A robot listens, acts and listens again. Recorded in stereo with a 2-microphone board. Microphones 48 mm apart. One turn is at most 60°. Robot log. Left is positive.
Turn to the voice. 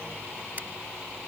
cmd idle
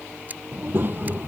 note: The child speaking: about 45° right or 135° right.
cmd yaw -45
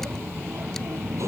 note: So it is at 85° right.
cmd yaw -60
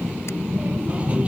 note: The child speaking is now 25° right.
cmd yaw -25
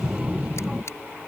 note: The child speaking is now 15° right.
cmd yaw -15
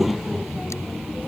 end: Facing the child speaking.